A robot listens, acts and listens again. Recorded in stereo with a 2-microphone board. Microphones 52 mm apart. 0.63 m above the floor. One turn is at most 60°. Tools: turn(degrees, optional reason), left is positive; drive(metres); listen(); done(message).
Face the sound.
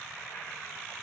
listen()
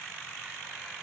listen()
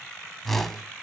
turn(degrees=30)
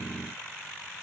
listen()
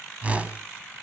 turn(degrees=-25, reason="So it is at 25° right.")
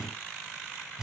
turn(degrees=-15, reason="The whoosh is now 15° right.")
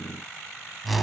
done("Found it: a whoosh, straight ahead.")